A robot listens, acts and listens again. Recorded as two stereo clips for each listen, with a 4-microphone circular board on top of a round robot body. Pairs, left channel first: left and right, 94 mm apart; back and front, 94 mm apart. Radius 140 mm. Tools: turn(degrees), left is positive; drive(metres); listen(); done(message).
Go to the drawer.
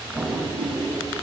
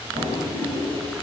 turn(degrees=-20)
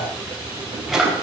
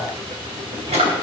drive(metres=1.0)
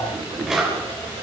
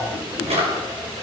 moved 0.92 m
drive(metres=1.0)
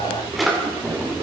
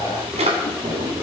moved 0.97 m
drive(metres=1.0)
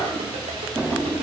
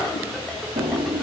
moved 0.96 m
drive(metres=1.0)
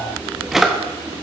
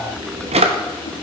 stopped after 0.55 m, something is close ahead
done("I am next to the drawer.")